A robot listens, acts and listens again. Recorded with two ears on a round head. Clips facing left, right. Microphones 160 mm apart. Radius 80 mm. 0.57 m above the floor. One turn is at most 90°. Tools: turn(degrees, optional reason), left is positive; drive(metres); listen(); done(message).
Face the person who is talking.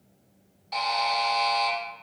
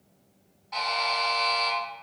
listen()
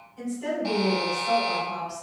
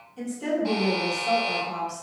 turn(degrees=-45, reason="The woman speaking: about 45° right or 135° right.")
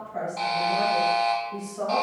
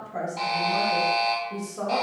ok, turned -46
turn(degrees=-80, reason="So it is at 80° right.")
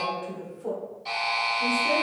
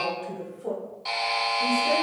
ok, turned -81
done("Found it: a woman speaking, straight ahead.")